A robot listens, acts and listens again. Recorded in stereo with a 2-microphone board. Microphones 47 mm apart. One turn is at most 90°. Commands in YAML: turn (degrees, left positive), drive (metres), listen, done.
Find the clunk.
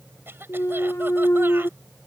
turn: 90
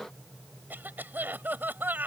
done: "Facing where the clunk came from. I can't hear it now."